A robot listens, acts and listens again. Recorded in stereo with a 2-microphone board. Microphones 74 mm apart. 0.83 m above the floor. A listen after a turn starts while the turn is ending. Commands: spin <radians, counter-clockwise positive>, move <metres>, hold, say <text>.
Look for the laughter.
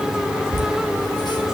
spin 1.57
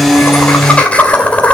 spin 0.35
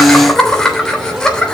spin 0.17
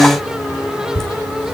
spin 0.17
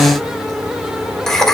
say Found it: laughter, straight ahead.